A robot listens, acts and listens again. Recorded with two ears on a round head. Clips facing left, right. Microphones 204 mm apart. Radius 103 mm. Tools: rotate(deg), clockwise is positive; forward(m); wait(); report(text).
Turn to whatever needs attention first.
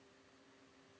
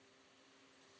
wait()
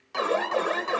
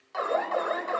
rotate(-45)
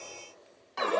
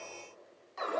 rotate(-90)
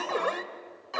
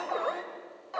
rotate(-40)
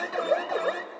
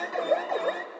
rotate(-10)
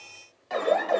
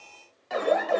report("Found it: an alarm, straight ahead.")